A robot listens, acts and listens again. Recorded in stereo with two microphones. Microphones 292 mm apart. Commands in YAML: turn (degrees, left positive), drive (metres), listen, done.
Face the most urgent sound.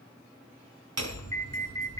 turn: 30
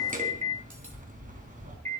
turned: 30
turn: -20
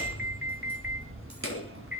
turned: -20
done: "Found it: an alarm, straight ahead, 2 to 4 m away."